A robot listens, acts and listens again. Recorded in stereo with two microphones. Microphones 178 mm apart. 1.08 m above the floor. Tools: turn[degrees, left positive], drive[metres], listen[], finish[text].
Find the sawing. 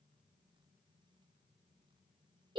Action: listen[]
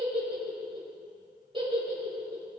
Action: listen[]
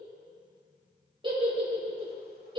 Action: finish[I can't make out sawing to turn to.]